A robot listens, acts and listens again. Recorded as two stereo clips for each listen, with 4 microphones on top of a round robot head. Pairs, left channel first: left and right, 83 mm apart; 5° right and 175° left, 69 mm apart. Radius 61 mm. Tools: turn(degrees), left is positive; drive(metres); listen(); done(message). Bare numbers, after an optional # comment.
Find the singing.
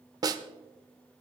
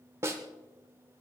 listen()
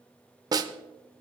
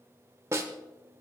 listen()
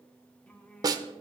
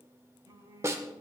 # The singing: 165° left.
turn(165)
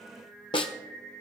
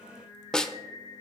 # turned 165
# The singing is now 10° left.
turn(10)
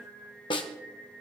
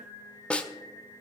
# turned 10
done("Facing the singing.")